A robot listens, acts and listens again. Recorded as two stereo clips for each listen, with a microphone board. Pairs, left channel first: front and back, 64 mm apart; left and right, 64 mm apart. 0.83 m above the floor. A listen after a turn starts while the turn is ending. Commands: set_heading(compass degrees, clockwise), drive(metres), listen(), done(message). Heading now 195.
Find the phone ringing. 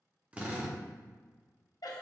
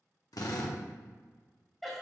listen()
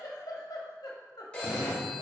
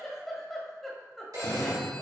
set_heading(265)
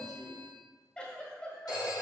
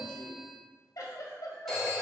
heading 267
done("Facing the phone ringing.")